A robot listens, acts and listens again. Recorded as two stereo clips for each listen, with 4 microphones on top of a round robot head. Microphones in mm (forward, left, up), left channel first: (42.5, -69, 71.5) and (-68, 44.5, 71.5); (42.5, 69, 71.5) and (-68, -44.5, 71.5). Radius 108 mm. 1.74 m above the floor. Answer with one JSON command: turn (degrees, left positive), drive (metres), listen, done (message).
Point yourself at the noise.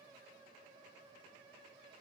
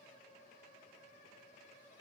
{"listen": true}
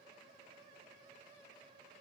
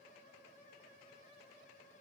{"listen": true}
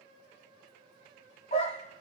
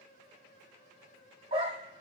{"turn": -80}
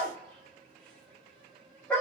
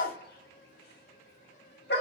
{"turn": 35}
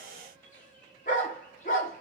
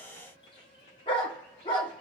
{"turn": -10}
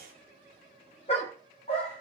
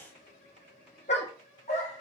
{"done": "Found it: a dog barking, straight ahead."}